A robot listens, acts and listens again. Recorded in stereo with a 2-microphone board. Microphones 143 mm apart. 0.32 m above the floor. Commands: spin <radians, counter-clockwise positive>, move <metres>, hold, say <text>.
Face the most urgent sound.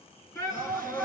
spin 0.35
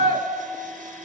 spin 2.44
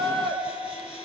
spin 0.61
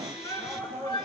spin 0.52
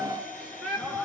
say Facing the shout, over 4 m away.